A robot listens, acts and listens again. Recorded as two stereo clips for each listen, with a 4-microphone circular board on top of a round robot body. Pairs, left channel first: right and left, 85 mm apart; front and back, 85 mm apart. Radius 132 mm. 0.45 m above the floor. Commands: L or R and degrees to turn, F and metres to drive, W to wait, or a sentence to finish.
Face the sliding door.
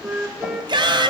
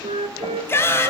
W
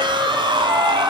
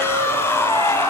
W
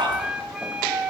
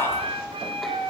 I can't make out a sliding door, only a flute and a shout.